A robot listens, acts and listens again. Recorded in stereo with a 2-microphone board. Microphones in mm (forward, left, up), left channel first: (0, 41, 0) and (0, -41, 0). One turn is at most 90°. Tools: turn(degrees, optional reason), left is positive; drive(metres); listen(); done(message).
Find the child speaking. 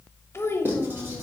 turn(degrees=30, reason="The child speaking: about 30° left or 150° left.")
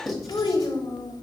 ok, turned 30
turn(degrees=90, reason="So it is at 120° left.")
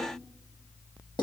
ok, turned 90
turn(degrees=30, reason="Nothing new. It was at 30° left.")
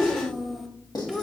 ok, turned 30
done("Found it: a child speaking, straight ahead.")